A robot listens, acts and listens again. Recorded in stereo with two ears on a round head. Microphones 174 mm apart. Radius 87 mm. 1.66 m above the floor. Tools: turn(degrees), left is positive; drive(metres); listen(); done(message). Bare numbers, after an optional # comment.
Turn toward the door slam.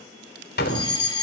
# The door slam: about 60° left or 120° left.
turn(60)
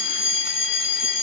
listen()
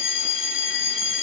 done("I heard a door slam, but can't make it out now. It was about straight ahead or 60° left.")